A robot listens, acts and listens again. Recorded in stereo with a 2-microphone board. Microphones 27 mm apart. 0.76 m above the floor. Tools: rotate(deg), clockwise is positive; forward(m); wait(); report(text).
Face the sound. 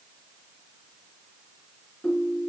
rotate(-90)
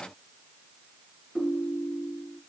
report("Facing the ringtone.")